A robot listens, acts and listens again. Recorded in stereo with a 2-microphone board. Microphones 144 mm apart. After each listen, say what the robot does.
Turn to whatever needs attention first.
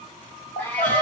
Turn 60° left.
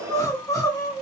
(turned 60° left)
Turn 25° left.
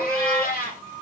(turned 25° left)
Found it: crying, straight ahead.